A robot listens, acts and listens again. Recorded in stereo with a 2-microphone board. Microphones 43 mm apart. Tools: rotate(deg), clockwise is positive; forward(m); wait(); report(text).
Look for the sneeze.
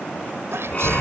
rotate(90)
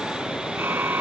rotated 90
report("I heard a sneeze from this way, but can't make it out now.")